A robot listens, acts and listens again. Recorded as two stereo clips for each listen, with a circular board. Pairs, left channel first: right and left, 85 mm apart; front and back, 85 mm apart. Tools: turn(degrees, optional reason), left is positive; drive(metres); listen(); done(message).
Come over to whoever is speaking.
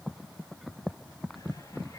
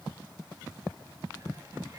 listen()
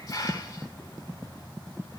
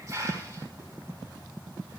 listen()
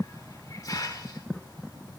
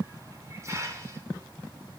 done("I can't make out anyone speaking to turn to.")